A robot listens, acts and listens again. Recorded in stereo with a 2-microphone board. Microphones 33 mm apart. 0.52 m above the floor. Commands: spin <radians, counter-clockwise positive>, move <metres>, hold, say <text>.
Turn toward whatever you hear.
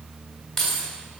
spin 0.52
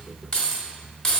spin 0.35
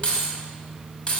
spin 2.62
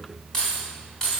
spin 0.35
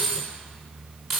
say Facing the keys jangling, 2 to 4 m away.